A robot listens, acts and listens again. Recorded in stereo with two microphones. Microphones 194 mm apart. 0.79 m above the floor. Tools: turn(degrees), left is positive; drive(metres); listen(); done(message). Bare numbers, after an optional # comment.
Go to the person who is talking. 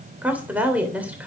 turn(-30)
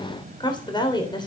# So it is at 25° left.
turn(25)
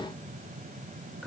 drive(1.0)
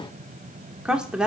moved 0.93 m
drive(1.0)
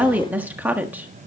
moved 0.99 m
# The woman speaking is now 10° right.
turn(-10)
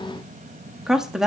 drive(1.0)
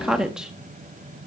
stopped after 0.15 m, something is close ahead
done("Arrived at the woman speaking, straight ahead.")